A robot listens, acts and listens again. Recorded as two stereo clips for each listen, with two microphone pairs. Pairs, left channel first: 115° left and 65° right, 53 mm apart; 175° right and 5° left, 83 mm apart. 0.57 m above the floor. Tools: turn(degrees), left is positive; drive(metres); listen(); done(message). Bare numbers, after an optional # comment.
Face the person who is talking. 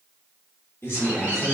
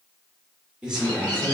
# The man speaking: 85° left.
turn(85)
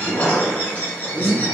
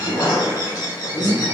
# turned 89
listen()
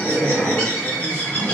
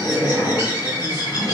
listen()
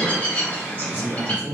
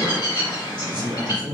done("Facing the man speaking.")